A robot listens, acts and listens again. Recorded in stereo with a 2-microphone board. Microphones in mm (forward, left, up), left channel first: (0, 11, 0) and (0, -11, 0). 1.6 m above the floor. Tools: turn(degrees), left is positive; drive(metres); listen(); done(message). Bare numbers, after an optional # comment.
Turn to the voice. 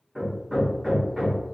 listen()
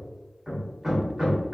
listen()
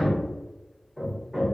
done("I can't make out anyone speaking, only hammering.")